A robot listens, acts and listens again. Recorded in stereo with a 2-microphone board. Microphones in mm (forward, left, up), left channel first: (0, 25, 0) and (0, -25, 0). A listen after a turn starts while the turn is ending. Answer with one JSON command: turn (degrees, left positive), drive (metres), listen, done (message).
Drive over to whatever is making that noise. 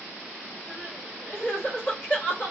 {"turn": 45}
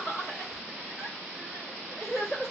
{"turn": 90}
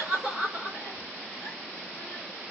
{"turn": 45}
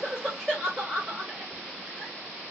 {"drive": 1.0}
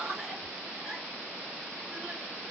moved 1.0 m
{"turn": -10}
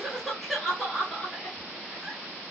{"drive": 1.0}
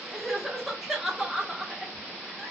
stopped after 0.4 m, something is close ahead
{"turn": -10}
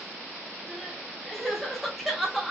{"done": "I am next to the crying."}